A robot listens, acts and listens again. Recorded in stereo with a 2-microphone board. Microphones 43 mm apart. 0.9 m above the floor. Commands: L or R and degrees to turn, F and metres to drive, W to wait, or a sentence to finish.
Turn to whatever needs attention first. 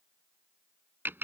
W
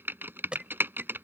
R25
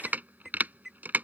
Found it: an alarm, straight ahead.